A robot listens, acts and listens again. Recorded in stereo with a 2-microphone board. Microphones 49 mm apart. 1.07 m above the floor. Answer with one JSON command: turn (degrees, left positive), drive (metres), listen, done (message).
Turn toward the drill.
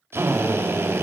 {"turn": -55}
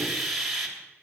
{"done": "Found it: a drill, straight ahead, 2 to 4 m away."}